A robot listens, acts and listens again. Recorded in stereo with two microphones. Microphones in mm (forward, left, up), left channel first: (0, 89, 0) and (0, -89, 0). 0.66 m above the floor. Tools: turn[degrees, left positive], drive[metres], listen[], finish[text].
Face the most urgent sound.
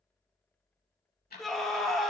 Action: turn[30]
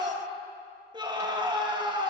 Thought: So it is at 30° right.
Action: turn[-30]
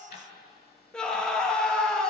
Action: finish[Facing the scream, under 1 m away.]